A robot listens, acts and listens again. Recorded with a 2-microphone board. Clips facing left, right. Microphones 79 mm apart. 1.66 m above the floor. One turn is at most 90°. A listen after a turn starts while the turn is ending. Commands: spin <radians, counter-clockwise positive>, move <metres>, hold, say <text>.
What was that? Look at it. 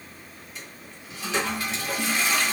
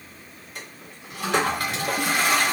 spin -1.05
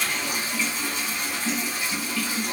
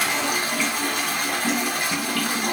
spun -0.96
spin -1.13
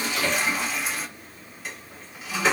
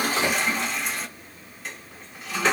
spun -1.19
say Facing the toilet flushing, under 1 m away.